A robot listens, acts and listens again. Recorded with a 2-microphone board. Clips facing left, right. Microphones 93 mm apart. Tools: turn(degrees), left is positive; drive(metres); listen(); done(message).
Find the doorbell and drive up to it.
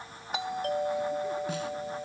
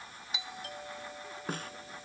turn(degrees=60)
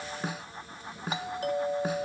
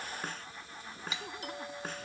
turn(degrees=55)
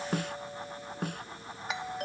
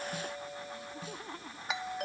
drive(metres=1.0)
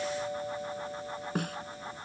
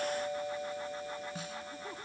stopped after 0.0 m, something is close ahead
done("Blocked. The doorbell is further on, straight ahead.")